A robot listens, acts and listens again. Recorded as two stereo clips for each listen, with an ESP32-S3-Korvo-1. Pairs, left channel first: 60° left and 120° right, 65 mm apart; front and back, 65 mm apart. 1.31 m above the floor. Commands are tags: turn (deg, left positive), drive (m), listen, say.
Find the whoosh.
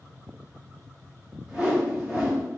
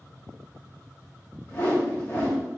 <turn deg="-45"/>
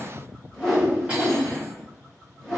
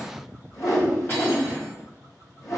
<turn deg="-20"/>
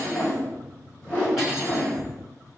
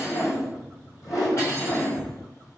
<say>Found it: a whoosh, straight ahead.</say>